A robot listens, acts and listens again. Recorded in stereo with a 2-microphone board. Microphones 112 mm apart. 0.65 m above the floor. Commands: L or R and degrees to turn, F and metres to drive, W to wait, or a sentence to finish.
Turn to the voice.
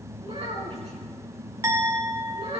R65
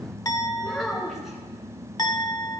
Facing the child speaking, over 4 m away.